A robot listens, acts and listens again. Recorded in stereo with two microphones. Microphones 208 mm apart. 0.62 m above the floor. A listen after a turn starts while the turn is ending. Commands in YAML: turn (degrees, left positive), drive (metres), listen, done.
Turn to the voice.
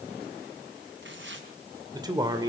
turn: -20
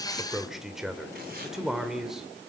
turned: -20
done: "Facing the man speaking, 2 to 4 m away."